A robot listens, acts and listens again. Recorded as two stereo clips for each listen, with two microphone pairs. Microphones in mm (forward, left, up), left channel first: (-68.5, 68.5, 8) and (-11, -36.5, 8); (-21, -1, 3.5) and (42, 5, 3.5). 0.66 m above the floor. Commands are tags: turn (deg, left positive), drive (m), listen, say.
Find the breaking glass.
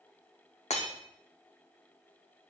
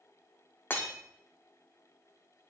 <turn deg="130"/>
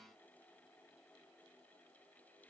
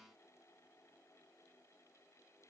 <say>I heard breaking glass from this way, but can't make it out now.</say>